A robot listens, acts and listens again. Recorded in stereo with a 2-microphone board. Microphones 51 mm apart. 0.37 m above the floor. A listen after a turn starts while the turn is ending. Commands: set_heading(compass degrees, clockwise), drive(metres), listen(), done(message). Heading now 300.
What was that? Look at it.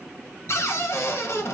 set_heading(235)
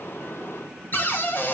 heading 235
set_heading(190)
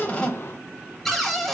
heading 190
done("Facing the cupboard door, under 1 m away.")